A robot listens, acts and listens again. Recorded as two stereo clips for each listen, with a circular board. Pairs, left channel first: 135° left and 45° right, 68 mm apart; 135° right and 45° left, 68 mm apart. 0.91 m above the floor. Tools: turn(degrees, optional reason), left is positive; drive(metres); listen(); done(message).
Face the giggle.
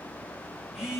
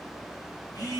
listen()
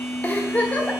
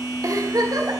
turn(degrees=70, reason="The giggle: 70° left.")
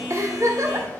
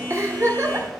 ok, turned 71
done("Found it: a giggle, straight ahead.")